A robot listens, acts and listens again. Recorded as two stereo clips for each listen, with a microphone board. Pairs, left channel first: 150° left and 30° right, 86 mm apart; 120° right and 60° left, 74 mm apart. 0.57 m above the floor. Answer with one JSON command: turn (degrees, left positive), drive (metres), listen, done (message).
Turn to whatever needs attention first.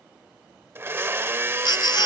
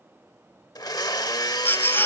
{"turn": 180}
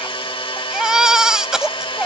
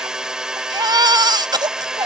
{"turn": 55}
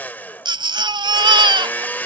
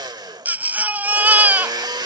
{"done": "Found it: a baby crying, straight ahead."}